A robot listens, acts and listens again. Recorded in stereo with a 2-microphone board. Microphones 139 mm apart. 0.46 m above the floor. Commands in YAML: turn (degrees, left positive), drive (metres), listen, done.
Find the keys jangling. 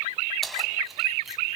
turn: 30
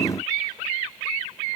listen: true
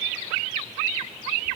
listen: true
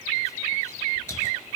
done: "I heard keys jangling, but can't make it out now. It was about 30° right or 150° left."